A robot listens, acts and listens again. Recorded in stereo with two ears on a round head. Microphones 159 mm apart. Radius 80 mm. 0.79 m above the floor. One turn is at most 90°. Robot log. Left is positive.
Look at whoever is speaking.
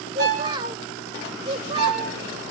note: The child speaking: about 25° right or 155° right.
cmd yaw -25
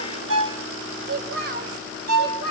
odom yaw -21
note: So it is at 125° right.
cmd yaw -90
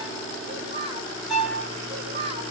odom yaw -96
note: The child speaking is now 30° right.
cmd yaw -30
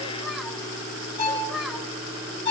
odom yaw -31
cmd idle
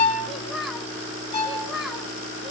end: Facing the child speaking, over 4 m away.